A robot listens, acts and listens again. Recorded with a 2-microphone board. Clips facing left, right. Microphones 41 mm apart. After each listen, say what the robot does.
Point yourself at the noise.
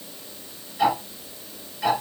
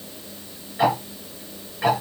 Turn 40° right.
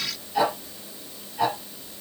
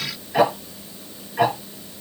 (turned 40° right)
Turn 100° right.
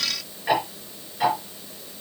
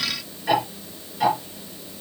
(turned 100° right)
Turn 15° left.
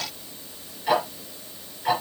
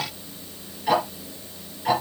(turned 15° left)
Found it: ticking, straight ahead.